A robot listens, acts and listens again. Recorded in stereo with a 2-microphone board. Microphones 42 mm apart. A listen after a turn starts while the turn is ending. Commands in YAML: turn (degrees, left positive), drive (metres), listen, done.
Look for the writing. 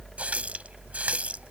listen: true
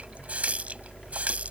listen: true
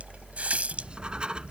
turn: -20
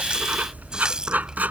turn: -140
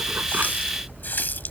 listen: true
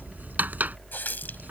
turn: -50
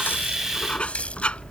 turn: 25
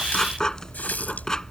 turn: 15
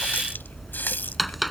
done: "Facing the writing."